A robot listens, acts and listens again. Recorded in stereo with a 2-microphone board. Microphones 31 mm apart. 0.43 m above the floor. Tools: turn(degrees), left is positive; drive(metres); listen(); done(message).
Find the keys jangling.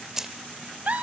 turn(degrees=-30)
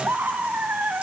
listen()
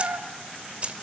turn(degrees=-140)
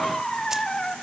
listen()
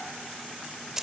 turn(degrees=-20)
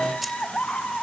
listen()
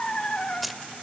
done("Facing the keys jangling.")